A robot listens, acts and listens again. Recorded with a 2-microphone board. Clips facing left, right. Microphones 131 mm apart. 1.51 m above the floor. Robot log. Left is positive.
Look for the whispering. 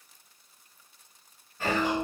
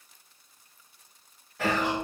note: The whispering: about 75° right or 105° right.
cmd yaw -75
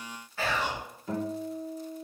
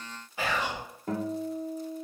note: So it is at 15° right.
cmd yaw -15
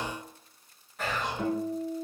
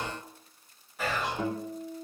end: Found it: whispering, straight ahead.